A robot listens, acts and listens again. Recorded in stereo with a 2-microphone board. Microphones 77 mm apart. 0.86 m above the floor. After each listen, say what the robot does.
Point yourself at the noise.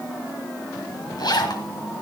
Turn 65° left.
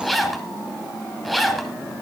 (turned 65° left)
Found it: a zipper, straight ahead, 2 to 4 m away.